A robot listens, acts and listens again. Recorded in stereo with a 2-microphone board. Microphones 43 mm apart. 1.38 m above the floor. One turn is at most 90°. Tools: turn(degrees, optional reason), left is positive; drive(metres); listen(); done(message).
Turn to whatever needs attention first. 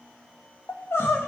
turn(degrees=75, reason="The crying: about 75° left or 105° left.")
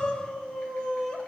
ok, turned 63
turn(degrees=20, reason="So it is at 20° left.")
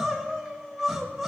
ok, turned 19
done("Found it: crying, straight ahead.")